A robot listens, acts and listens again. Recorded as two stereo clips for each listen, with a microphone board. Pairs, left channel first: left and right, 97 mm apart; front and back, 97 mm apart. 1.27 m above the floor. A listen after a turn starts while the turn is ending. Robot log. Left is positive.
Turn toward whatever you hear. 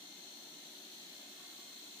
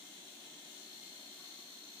cmd idle
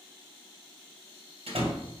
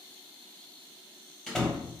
note: The door slam: 85° right.
cmd yaw -85
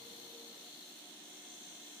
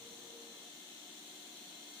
end: Facing where the door slam came from. I can't hear it now.